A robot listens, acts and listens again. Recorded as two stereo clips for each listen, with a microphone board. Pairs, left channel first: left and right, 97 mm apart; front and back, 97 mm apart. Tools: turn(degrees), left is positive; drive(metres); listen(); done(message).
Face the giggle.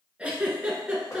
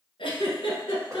turn(degrees=-10)
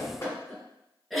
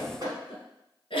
done("Facing the giggle, 1 to 2 m away.")